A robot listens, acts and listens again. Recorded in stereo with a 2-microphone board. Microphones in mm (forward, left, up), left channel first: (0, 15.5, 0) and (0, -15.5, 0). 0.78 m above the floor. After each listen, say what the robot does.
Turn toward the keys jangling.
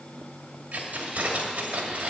Turn 50° right.
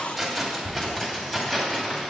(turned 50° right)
Turn 10° left.
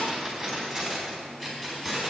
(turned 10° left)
Facing the keys jangling, over 4 m away.